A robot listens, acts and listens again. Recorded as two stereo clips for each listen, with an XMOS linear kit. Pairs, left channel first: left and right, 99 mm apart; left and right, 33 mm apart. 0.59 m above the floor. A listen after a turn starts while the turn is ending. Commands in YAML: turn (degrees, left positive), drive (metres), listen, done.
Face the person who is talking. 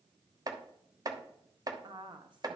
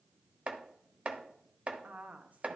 turn: -50
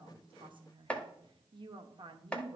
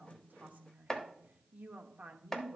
turn: -65
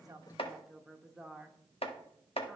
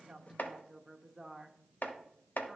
done: "Facing the woman speaking."